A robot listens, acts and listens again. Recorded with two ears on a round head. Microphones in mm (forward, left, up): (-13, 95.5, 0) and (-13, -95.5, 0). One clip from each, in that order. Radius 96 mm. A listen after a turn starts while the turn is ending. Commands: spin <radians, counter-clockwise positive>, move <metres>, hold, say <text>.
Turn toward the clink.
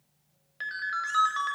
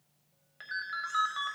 hold
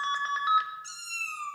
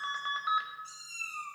hold
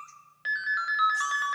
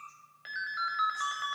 say I can't make out a clink, only a ringtone and a cat meowing.